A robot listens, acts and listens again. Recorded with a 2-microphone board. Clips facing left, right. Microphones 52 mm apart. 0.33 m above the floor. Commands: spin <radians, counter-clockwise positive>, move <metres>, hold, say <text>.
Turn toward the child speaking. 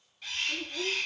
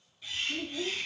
spin 0.96
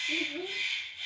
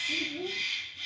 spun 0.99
spin 0.96
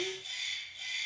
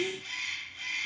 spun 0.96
say Facing the child speaking, 2 to 4 m away.